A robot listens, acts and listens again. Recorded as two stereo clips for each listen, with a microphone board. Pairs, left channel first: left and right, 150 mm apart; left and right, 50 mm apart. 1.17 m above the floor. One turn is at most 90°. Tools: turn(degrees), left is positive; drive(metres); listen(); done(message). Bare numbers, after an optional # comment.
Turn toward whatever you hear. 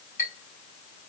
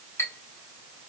turn(90)
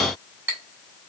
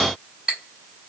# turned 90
# So it is at 15° right.
turn(-15)
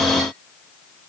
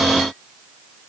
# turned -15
listen()
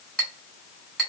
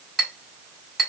done("Facing the clink, 2 to 4 m away.")